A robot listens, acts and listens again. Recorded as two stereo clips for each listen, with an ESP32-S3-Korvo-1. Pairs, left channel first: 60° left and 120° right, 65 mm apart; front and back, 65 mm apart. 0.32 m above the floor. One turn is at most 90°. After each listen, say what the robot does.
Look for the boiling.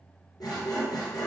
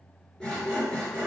Keep listening.
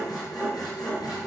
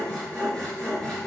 Keep listening.
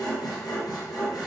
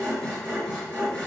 I can't make out boiling, only sawing.